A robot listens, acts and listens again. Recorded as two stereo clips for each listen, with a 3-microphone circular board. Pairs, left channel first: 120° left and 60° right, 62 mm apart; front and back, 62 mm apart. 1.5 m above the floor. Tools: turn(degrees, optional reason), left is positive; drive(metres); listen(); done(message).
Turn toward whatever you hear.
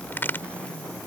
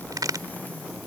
turn(degrees=175, reason="The crack: 175° left.")
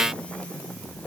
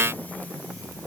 done("I heard a crack from this way, but can't make it out now.")